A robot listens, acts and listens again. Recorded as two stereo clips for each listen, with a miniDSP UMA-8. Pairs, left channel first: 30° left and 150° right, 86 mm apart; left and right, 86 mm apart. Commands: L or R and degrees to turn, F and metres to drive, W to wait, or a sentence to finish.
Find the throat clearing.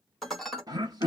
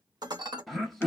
L180
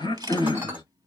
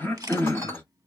L25
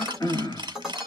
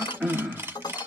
Facing the throat clearing.